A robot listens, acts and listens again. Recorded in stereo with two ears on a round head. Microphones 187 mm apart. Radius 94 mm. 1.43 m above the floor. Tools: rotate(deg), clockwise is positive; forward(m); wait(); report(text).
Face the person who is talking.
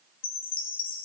wait()
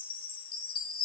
wait()
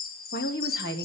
rotate(-50)
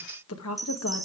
rotate(-80)
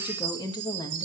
rotate(-20)
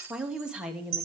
report("Facing the woman speaking.")